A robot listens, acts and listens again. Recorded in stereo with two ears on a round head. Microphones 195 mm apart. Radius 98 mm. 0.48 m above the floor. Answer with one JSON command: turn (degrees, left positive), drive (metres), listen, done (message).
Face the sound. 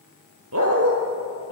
{"turn": -65}
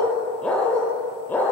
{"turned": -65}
{"turn": 10}
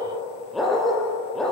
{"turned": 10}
{"done": "Found it: a dog barking, straight ahead, over 4 m away."}